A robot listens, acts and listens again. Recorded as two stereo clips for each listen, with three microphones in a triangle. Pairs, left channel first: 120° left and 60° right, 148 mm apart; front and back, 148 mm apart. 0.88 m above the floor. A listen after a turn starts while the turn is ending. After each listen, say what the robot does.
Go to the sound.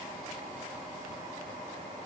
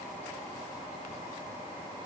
Keep listening.
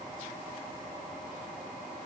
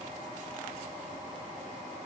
Keep listening.
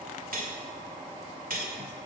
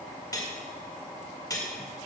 Turn 65° right.
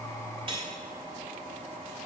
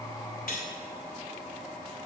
Drive 1.0 m forward.
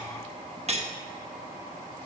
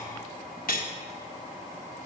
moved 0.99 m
Turn 15° right.
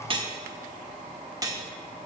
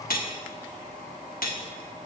Drive 1.0 m forward.
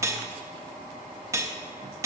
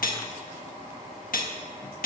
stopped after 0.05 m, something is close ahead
Turn 10° left.
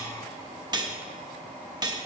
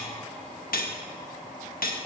Arrived at the cutlery clinking, straight ahead.